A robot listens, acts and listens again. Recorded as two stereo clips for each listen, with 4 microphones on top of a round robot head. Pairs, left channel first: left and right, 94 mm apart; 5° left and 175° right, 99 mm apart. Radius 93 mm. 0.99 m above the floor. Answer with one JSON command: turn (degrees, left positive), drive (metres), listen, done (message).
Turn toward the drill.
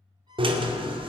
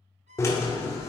{"turn": -60}
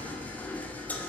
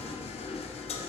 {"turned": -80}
{"turn": 20}
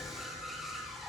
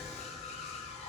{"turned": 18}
{"done": "Found it: a drill, straight ahead, 2 to 4 m away."}